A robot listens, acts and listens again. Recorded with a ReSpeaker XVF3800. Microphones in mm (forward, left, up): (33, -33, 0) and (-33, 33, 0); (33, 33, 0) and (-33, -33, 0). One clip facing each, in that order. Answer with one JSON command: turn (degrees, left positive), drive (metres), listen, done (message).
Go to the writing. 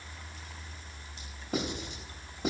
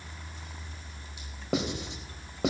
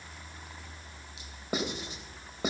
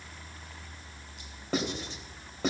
{"turn": 125}
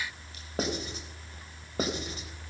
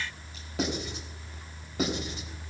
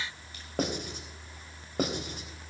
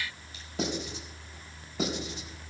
{"drive": 1.0}
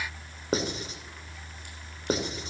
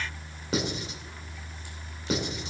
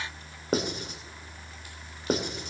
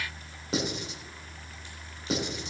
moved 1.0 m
{"drive": 1.0}
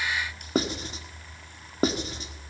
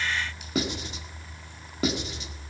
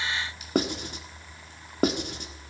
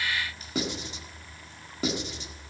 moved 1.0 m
{"drive": 1.0}
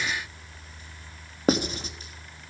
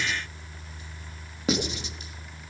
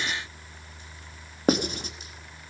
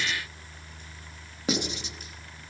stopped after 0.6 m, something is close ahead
{"done": "I am next to the writing."}